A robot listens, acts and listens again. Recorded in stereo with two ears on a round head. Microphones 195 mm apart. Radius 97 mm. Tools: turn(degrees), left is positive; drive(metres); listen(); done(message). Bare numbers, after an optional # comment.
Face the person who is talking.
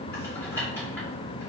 listen()
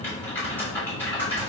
listen()
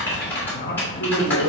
# The man speaking: about 45° left or 135° left.
turn(45)
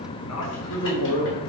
# So it is at 85° left.
turn(85)
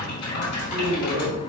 # The man speaking is now 35° left.
turn(35)
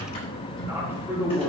# The man speaking is now 10° right.
turn(-10)
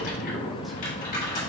listen()
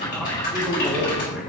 done("Facing the man speaking.")